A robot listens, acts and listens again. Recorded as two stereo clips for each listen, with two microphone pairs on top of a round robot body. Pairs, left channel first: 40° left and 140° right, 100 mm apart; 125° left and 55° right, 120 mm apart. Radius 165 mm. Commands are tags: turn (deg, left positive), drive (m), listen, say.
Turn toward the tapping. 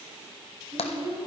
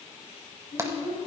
<turn deg="15"/>
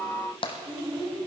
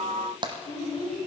<say>Facing the tapping, under 1 m away.</say>